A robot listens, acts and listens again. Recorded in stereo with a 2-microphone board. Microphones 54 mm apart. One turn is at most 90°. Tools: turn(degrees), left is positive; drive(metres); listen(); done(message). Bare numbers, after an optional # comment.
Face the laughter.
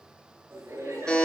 # The laughter: about 50° right or 130° right.
turn(-50)
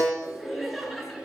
done("Facing the laughter, over 4 m away.")